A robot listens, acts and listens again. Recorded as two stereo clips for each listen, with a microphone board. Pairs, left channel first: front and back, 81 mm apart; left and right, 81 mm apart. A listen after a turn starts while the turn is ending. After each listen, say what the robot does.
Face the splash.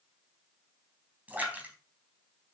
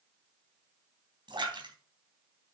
Turn 110° right.
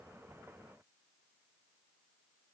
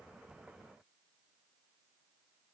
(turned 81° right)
Turn 30° right.
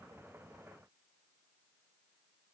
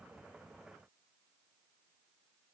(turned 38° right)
Turn 10° left.
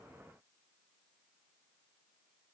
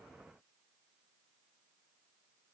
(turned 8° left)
Facing where the splash came from. I can't hear it now.